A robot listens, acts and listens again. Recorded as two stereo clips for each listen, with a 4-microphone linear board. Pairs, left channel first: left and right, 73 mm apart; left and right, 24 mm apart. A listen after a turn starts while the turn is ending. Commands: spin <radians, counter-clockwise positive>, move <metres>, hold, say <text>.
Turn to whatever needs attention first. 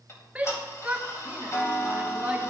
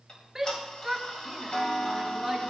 spin -0.26
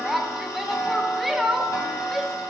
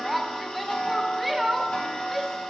say Found it: a shout, straight ahead.